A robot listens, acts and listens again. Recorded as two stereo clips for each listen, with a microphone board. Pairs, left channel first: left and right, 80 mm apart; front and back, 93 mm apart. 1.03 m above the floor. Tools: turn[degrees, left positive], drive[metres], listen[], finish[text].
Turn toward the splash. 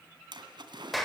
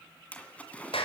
Thought: The splash: 75° right.
Action: turn[-75]
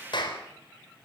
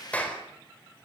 Action: finish[Facing where the splash came from. I can't hear it now.]